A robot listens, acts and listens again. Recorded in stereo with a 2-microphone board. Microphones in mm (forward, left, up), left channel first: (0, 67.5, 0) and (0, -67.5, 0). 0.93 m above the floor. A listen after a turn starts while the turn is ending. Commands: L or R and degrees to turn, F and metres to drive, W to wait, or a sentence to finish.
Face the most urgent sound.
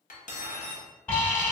L30
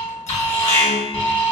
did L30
L135
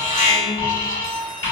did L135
L35
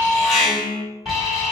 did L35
Facing the alarm, 1 to 2 m away.